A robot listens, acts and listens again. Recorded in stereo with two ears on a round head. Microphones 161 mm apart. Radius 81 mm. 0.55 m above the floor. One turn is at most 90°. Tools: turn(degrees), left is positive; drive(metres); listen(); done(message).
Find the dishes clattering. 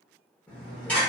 turn(degrees=30)
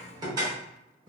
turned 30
turn(degrees=-25)
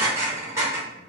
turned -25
turn(degrees=-15)
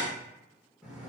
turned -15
done("Facing the dishes clattering, under 1 m away.")